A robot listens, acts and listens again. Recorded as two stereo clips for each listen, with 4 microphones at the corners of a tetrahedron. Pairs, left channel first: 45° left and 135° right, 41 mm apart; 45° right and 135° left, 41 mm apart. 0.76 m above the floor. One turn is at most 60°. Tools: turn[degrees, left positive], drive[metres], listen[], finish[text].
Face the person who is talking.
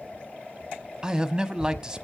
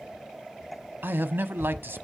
Thought: The man speaking: 155° left.
Action: turn[60]
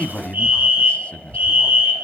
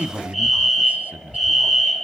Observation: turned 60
Thought: The man speaking is now 95° left.
Action: turn[60]
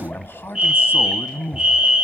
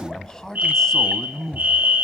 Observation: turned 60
Thought: The man speaking is now 30° left.
Action: turn[30]
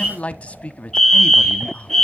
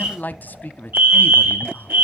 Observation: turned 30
Thought: The man speaking is now 10° right.
Action: turn[-10]
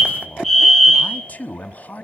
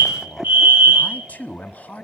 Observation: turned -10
Action: finish[Found it: a man speaking, straight ahead.]